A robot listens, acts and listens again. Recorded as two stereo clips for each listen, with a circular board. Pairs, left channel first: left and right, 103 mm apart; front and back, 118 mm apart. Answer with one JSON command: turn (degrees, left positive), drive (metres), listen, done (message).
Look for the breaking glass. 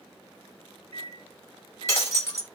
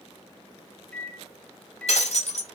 {"turn": 25}
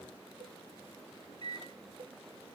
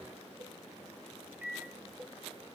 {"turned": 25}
{"done": "Facing where the breaking glass came from. I can't hear it now."}